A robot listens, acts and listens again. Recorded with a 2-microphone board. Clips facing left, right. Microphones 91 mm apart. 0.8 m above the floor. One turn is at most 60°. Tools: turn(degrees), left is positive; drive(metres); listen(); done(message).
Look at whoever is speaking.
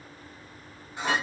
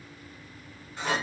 listen()
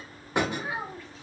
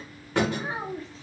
turn(degrees=-30)
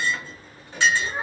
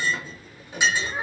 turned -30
done("Facing the child speaking.")